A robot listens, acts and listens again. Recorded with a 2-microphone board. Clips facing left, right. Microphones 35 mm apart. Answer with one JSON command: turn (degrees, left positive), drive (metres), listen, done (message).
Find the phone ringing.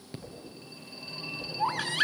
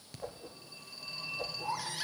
{"turn": 20}
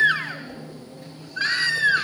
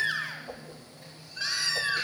{"done": "Found it: a phone ringing, straight ahead, over 4 m away."}